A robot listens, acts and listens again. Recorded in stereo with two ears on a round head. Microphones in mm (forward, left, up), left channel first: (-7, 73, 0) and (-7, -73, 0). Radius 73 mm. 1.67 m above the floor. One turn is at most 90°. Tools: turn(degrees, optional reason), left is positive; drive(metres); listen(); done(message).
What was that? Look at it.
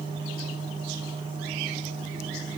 listen()
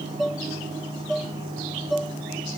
turn(degrees=30)
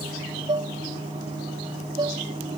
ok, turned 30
turn(degrees=-30, reason="So it is at 30° right.")
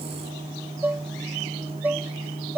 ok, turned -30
turn(degrees=-10, reason="The dishes clattering is now 10° right.")
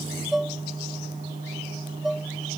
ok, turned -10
done("Facing the dishes clattering.")